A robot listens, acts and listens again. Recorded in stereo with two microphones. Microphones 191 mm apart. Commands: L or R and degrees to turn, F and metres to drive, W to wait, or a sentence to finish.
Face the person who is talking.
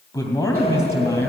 L15
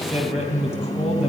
L150
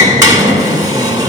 W
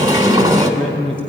R30
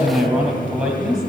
Found it: a man speaking, straight ahead, 2 to 4 m away.